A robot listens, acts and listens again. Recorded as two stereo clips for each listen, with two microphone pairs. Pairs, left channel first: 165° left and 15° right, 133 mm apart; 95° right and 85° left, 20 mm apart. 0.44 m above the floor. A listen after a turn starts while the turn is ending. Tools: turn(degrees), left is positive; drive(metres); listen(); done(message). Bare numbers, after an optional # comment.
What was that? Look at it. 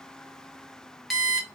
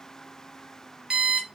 # The alarm clock: 75° left.
turn(75)
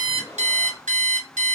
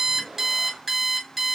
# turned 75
done("Facing the alarm clock.")